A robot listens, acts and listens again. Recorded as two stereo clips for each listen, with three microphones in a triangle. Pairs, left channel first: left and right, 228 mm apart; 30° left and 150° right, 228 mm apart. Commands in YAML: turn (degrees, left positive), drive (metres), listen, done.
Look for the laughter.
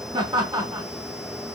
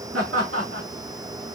turn: -165
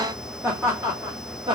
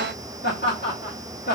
turn: -20
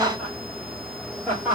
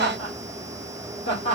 turn: -10
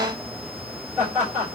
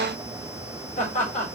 turn: -10
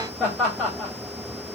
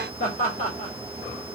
done: "Found it: laughter, straight ahead, 2 to 4 m away."